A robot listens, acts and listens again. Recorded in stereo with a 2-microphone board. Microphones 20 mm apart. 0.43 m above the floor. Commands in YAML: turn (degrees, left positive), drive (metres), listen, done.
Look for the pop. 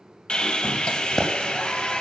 turn: 25
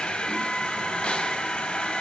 listen: true
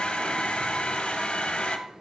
done: "I heard a pop, but can't make it out now. It was about straight ahead or 130° left."